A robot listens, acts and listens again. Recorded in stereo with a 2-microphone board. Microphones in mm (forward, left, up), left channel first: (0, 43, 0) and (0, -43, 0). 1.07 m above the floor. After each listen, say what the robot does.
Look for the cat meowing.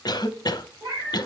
Turn 45° right.
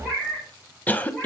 Facing the cat meowing.